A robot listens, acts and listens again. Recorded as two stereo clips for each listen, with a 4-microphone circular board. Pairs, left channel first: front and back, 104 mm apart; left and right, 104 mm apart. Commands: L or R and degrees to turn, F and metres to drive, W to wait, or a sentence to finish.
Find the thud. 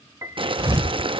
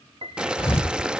L120
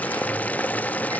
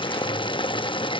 Facing where the thud came from. I can't hear it now.